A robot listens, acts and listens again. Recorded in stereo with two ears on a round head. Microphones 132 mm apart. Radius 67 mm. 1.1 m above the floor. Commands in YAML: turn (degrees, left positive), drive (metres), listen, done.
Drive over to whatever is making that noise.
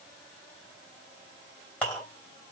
turn: 30
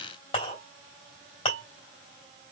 turn: 140
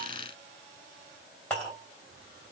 drive: 1.0
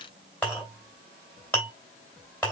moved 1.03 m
turn: 10
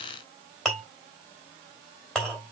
drive: 1.0
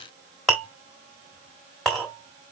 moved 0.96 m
drive: 1.0
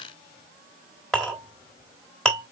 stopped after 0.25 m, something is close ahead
done: "Arrived at the clink, straight ahead."